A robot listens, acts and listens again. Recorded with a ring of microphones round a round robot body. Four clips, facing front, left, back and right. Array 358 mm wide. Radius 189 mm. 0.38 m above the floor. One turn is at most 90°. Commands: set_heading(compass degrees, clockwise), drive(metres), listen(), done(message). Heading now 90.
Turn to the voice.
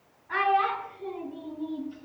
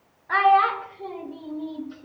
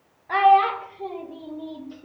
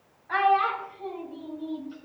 set_heading(0)
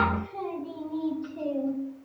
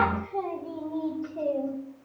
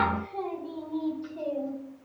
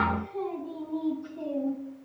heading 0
set_heading(280)
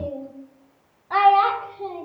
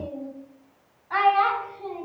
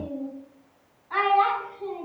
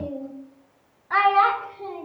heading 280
set_heading(300)
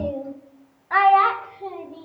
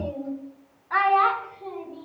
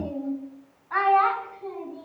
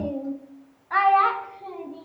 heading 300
done("Facing the child speaking.")